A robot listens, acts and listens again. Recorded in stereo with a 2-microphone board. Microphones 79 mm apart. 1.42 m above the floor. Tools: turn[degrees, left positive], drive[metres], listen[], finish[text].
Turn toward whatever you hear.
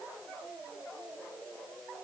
Action: listen[]
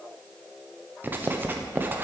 Thought: The writing: about 25° right or 155° right.
Action: turn[-25]
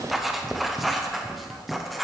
Action: finish[Found it: writing, straight ahead, under 1 m away.]